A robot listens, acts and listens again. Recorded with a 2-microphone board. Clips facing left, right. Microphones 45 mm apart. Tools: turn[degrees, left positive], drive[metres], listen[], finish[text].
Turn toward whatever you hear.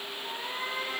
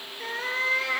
Action: turn[-90]
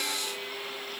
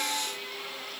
Action: listen[]
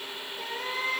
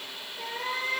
Action: finish[Found it: a cat meowing, straight ahead.]